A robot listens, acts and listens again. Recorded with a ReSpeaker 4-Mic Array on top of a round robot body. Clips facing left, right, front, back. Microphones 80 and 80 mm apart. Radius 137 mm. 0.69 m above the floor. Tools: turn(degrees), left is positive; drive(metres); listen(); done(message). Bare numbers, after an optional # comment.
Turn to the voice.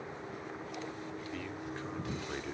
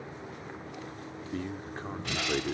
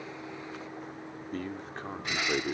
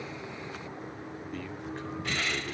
# The man speaking: 45° right.
turn(-45)
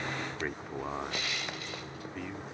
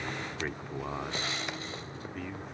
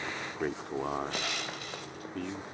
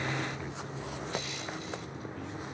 done("Found it: a man speaking, straight ahead.")